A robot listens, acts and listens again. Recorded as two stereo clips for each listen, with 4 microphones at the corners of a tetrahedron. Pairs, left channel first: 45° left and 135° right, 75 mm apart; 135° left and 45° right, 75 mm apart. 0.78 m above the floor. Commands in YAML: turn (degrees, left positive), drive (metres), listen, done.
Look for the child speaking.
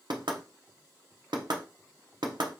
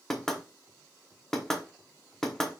listen: true
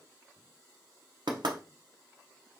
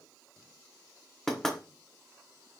listen: true
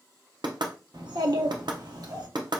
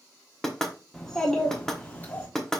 turn: -160
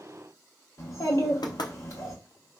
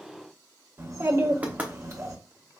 done: "Facing the child speaking, 1 to 2 m away."